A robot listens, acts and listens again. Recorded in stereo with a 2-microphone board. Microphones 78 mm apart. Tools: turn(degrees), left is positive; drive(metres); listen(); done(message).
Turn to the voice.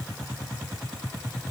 listen()
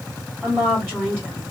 turn(degrees=-20)
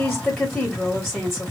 done("Facing the woman speaking, 1 to 2 m away.")